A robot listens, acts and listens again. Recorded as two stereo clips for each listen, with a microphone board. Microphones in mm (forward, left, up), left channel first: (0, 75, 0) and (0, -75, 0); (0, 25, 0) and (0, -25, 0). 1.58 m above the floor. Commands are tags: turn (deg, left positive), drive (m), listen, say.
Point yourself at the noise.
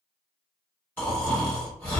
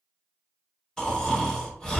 <turn deg="30"/>
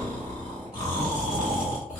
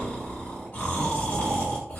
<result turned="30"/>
<turn deg="135"/>
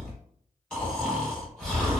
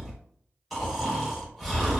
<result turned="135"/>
<say>Facing the snoring.</say>